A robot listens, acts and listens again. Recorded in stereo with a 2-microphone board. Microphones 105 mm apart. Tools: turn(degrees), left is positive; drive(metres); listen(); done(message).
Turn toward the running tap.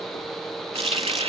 turn(degrees=-65)
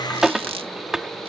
done("Found it: a running tap, straight ahead.")